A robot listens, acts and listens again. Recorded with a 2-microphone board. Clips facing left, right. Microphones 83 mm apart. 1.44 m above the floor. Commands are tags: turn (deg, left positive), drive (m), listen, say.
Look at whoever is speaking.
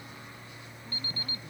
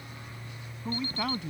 <turn deg="-90"/>
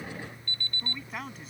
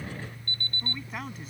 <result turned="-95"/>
<say>Facing the man speaking.</say>